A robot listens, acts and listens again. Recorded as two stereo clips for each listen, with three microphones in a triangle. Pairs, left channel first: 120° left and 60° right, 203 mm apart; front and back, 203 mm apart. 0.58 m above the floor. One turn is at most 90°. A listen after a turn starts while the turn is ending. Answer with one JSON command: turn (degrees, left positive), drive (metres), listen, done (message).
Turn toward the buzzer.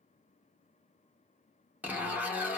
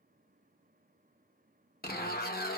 {"listen": true}
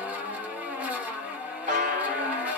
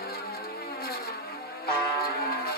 {"turn": -20}
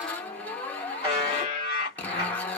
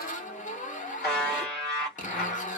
{"done": "Facing the buzzer."}